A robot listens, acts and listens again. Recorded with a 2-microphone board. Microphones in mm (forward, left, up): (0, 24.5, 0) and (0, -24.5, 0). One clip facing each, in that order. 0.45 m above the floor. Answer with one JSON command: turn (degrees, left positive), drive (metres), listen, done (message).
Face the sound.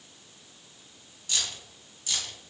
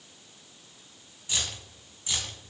{"turn": -20}
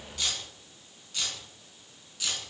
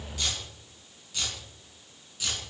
{"turn": -30}
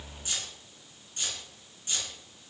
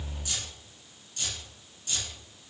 {"turn": 25}
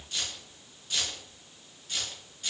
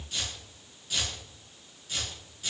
{"done": "Found it: keys jangling, straight ahead, 2 to 4 m away."}